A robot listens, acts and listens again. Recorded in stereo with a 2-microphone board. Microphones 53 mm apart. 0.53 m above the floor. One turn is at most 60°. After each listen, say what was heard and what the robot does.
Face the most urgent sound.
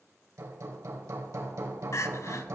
The crying: about 70° left or 110° left. Turn 60° left.
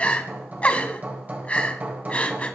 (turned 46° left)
So it is at 25° left. Turn 25° left.
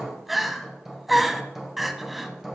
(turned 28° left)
Found it: crying, straight ahead, under 1 m away.